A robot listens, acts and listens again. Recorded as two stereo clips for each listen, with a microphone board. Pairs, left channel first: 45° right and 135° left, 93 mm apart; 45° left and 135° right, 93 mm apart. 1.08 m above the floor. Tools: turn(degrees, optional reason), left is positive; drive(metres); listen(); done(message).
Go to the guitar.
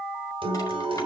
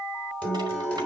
turn(degrees=120, reason="The guitar: 120° left.")
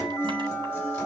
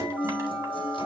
turn(degrees=20, reason="The guitar is now 20° left.")
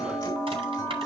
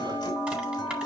drive(metres=1.0)
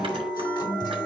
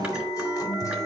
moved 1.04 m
turn(degrees=-10, reason="The guitar is now 10° right.")
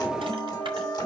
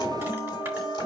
listen()
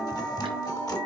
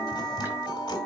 drive(metres=1.0)
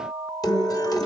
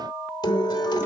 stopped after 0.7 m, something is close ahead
done("Arrived at the guitar, straight ahead.")